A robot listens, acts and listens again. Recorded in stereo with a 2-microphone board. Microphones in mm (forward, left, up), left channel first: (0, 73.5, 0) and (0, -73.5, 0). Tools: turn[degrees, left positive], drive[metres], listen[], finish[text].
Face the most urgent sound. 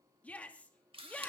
Action: turn[30]
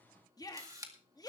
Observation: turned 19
Thought: So it is at 155° left.
Action: turn[155]
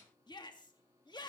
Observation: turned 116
Thought: The shout is now 35° left.
Action: turn[35]
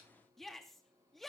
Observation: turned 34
Action: finish[Found it: a shout, straight ahead.]